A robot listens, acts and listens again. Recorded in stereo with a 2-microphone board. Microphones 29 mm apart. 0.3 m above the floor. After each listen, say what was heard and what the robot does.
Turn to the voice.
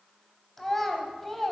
Turn 30° left.
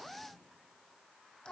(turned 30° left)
So it is at 135° left. Turn 135° left.
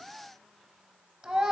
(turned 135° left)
The child speaking is now 35° right. Turn 35° right.
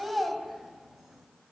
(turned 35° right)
The child speaking is now 10° right. Turn 10° right.
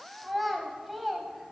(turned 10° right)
Found it: a child speaking, straight ahead, under 1 m away.